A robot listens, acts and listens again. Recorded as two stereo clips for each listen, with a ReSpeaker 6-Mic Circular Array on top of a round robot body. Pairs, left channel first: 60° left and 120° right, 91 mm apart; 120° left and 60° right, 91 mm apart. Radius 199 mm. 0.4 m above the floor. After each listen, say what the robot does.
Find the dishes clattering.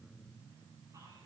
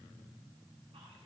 Keep listening.
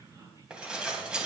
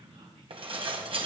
Turn 40° right.
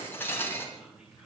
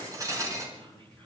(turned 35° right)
Facing the dishes clattering.